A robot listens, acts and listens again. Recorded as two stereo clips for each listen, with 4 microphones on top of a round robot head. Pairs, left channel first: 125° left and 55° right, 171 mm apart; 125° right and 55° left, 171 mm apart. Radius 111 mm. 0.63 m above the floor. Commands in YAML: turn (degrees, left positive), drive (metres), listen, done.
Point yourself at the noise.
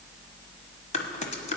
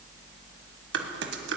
turn: 75
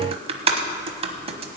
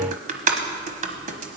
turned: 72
done: "Facing the typing on a keyboard."